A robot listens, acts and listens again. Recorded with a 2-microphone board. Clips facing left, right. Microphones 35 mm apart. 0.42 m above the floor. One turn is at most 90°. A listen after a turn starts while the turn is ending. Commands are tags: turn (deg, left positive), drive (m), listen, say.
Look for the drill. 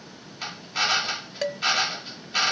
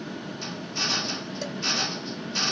<turn deg="55"/>
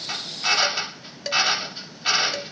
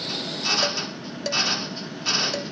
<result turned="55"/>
<turn deg="60"/>
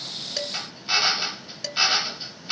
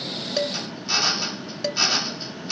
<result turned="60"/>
<turn deg="35"/>
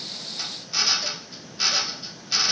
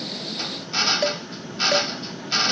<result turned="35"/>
<turn deg="-15"/>
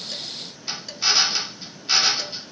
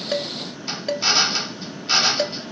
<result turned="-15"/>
<say>Facing the drill.</say>